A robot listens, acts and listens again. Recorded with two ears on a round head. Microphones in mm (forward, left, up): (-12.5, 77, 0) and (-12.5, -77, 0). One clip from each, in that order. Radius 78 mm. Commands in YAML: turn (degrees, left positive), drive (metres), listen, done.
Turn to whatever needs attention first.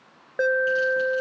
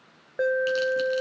turn: 25
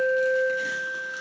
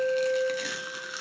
turn: 125
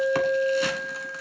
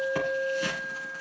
turn: 15
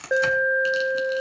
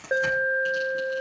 done: "Facing the alarm."